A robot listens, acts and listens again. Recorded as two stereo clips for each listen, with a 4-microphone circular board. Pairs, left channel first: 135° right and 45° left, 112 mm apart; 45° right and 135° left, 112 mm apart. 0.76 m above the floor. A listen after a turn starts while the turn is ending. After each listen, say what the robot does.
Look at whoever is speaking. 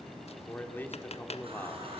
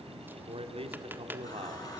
Turn 155° left.
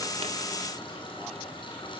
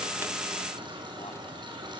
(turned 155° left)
Keep listening.
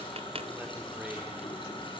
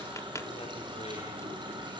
Keep listening.
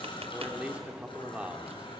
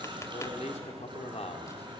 Turn 35° right.
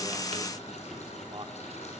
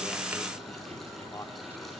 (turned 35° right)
Turn 10° left.
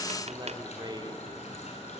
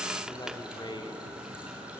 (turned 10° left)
Found it: a man speaking, straight ahead, 2 to 4 m away.